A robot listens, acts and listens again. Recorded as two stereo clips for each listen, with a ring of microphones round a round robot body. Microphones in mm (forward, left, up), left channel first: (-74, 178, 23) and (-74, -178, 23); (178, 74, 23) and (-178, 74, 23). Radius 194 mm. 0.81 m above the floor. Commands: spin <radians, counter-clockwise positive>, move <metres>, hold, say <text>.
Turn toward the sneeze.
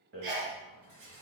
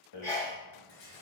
spin -1.40
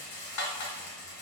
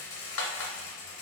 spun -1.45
say Facing where the sneeze came from. I can't hear it now.